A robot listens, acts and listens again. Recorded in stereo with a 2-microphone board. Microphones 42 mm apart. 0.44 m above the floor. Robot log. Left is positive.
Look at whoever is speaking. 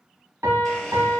cmd idle
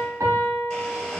cmd idle
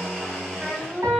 note: The child speaking: about 20° right or 160° right.
cmd yaw -20
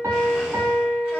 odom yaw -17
cmd idle
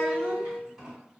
cmd idle
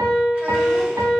end: I heard a child speaking, but can't make it out now. It was about 5° right or 140° right.